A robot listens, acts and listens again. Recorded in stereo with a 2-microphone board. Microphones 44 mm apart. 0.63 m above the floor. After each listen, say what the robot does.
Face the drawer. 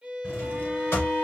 Turn 65° left.
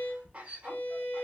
Keep listening.
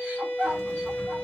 Keep listening.
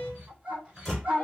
Found it: a drawer, straight ahead, 1 to 2 m away.